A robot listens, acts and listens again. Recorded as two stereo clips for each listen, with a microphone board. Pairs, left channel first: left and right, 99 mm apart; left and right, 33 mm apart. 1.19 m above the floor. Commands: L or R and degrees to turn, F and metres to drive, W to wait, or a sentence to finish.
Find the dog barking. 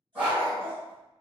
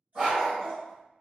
R15
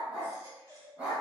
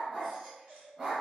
R30
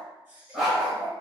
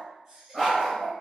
R30
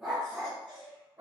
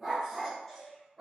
R30
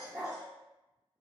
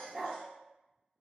R20
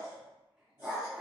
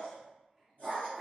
R30
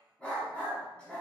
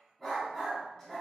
L10
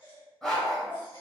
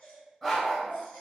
Found it: a dog barking, straight ahead.